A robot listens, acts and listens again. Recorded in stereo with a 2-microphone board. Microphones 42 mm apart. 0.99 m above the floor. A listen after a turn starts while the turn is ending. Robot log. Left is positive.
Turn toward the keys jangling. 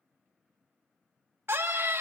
cmd idle
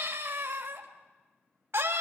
cmd idle
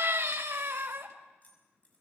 note: The keys jangling: about 35° left or 145° left.
cmd yaw +35
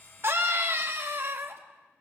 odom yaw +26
cmd idle
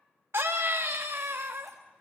cmd idle
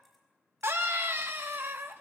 end: I heard keys jangling, but can't make it out now. It was about 10° left or 115° left.